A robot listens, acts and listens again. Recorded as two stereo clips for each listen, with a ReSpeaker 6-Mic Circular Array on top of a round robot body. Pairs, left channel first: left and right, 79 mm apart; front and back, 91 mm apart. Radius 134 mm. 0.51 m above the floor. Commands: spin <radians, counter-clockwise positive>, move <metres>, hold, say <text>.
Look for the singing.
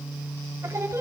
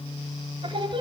spin -2.62
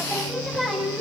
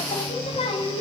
say Found it: singing, straight ahead.